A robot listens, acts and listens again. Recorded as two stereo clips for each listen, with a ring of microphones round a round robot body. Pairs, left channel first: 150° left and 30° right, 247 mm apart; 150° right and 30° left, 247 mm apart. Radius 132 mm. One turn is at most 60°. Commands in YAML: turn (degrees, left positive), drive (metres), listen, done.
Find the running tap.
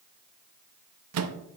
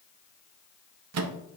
listen: true
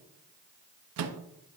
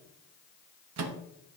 listen: true
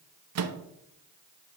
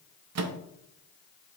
done: "I can't make out a running tap to turn to."